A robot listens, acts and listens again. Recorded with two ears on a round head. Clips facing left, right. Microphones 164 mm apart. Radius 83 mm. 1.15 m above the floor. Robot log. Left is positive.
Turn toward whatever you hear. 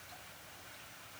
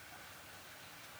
cmd idle
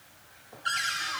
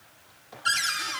note: The cupboard door: about 45° right or 135° right.
cmd yaw -45
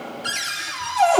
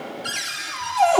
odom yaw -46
end: Found it: a cupboard door, straight ahead, 2 to 4 m away.